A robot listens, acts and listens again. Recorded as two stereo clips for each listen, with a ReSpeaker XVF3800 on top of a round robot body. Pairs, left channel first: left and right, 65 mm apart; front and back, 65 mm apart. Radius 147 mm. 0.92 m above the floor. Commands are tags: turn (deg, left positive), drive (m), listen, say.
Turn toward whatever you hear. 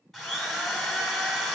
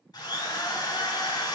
<say>Facing the drill.</say>